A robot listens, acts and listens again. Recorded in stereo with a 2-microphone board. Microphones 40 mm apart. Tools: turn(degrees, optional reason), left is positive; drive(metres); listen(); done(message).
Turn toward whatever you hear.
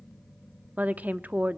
turn(degrees=-40, reason="The woman speaking: about 40° right or 140° right.")
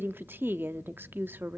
turn(degrees=-90, reason="So it is at 90° right.")
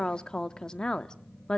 turn(degrees=25, reason="The woman speaking is now 25° left.")
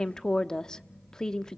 turn(degrees=20, reason="The woman speaking is now 20° left.")
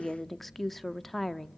done("Found it: a woman speaking, straight ahead, under 1 m away.")